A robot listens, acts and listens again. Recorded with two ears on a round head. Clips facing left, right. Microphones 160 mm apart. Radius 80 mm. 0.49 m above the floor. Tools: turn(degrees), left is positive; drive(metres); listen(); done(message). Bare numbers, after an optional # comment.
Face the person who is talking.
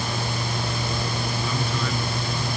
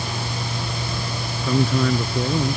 # The man speaking: about 40° right or 140° right.
turn(-40)
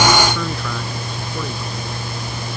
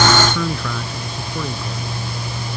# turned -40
done("Facing the man speaking.")